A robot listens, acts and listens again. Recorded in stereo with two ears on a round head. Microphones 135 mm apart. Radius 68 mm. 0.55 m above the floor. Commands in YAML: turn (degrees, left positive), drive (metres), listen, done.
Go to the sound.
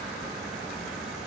listen: true
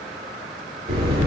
turn: -40
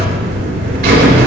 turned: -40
turn: -100
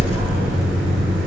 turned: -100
turn: -15
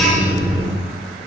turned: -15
drive: 1.0
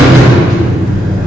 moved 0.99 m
drive: 1.0
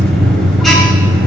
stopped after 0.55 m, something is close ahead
done: "I am next to the buzzer."